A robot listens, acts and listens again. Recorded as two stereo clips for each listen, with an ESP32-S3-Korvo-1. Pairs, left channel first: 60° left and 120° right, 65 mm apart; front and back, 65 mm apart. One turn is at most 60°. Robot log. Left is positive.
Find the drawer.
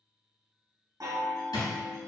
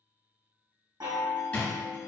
note: The drawer: 70° left.
cmd yaw +60
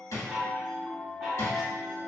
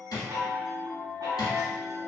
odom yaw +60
note: The drawer is now 20° left.
cmd yaw +20
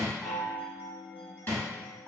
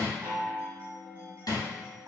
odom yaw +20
end: Found it: a drawer, straight ahead, 1 to 2 m away.